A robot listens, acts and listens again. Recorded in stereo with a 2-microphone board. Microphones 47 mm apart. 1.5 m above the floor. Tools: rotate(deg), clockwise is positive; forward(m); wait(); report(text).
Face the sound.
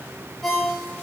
rotate(-30)
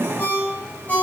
rotate(-145)
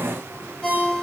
rotate(-15)
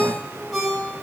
report("Facing the ringtone.")